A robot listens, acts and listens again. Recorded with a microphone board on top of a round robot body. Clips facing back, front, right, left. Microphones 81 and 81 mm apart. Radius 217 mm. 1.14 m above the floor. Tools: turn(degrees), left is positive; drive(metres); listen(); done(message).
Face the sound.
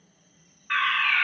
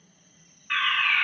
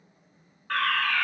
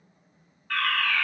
turn(degrees=-110)
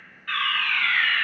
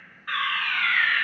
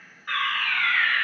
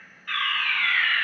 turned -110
turn(degrees=-40)
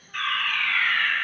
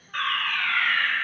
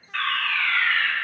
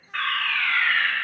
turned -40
turn(degrees=20)
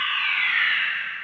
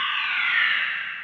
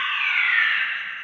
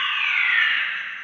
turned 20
done("Found it: a fire alarm, straight ahead, 2 to 4 m away.")